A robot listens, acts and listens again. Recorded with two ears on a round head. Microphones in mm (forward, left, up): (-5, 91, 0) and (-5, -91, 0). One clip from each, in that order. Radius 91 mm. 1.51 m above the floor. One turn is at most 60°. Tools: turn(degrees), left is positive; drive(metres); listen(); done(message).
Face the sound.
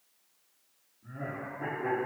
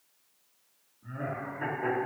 turn(degrees=-60)
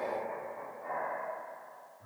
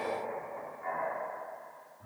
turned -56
turn(degrees=-35)
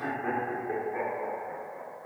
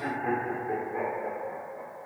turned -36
turn(degrees=10)
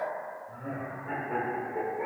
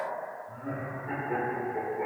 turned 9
done("Found it: laughter, straight ahead, over 4 m away.")